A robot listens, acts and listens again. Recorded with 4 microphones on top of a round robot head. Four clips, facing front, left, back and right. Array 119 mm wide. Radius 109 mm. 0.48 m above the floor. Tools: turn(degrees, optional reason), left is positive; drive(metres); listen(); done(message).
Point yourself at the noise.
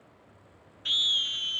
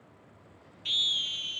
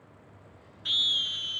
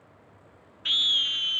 turn(degrees=-100, reason="The scream: 100° right.")
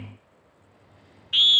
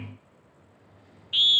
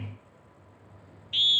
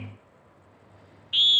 turn(degrees=10, reason="The scream is now 10° left.")
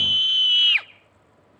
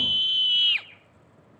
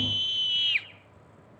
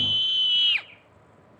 done("Facing the scream.")